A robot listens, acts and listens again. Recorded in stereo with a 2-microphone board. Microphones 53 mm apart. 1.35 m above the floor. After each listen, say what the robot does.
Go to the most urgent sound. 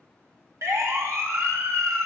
Turn 90° right.
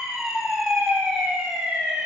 Turn 10° right.
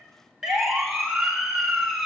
Drive 1.0 m forward.
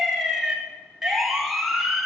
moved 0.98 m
Drive 1.0 m forward.
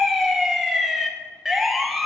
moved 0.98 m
Drive 1.0 m forward.
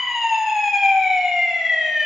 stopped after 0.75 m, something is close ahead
I am next to the siren.